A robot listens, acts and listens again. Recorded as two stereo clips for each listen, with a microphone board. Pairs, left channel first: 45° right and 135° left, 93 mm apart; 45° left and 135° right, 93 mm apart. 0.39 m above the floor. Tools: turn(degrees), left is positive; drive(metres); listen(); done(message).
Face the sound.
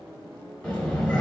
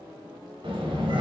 turn(degrees=-125)
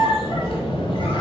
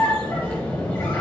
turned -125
turn(degrees=-25)
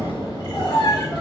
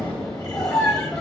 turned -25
done("Found it: a squeak, straight ahead.")